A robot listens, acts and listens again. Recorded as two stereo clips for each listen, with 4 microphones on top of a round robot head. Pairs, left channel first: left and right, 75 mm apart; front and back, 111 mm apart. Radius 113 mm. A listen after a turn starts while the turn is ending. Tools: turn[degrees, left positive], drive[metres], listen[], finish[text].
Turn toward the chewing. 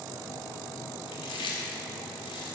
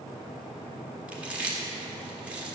Thought: The chewing: 105° left.
Action: turn[105]
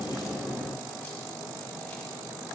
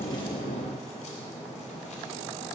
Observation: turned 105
Action: listen[]
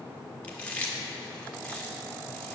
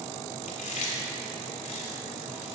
Thought: The chewing is now 15° left.
Action: turn[15]
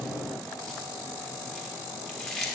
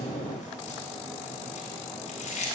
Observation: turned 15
Action: finish[Found it: chewing, straight ahead.]